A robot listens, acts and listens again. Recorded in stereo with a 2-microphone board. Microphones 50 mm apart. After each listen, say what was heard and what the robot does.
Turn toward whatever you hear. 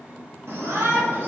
The shout: about 60° right or 120° right. Turn 60° right.
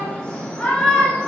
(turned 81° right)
So it is at 20° left. Turn 20° left.
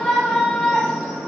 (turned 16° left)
Facing the shout.